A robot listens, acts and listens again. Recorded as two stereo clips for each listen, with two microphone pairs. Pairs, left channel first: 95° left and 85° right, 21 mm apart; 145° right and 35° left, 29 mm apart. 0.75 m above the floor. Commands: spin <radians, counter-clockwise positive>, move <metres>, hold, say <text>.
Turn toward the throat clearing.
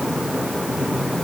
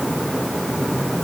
hold
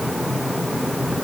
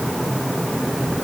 hold
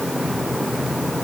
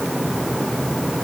say I can't make out throat clearing.